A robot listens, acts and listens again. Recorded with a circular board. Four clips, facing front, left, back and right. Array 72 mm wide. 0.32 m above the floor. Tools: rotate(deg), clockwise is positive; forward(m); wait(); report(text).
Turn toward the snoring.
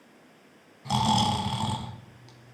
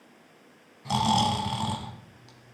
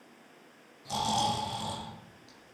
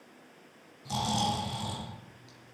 rotate(-45)
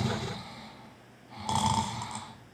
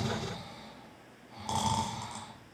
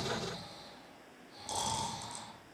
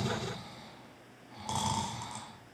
report("Found it: snoring, straight ahead, 1 to 2 m away.")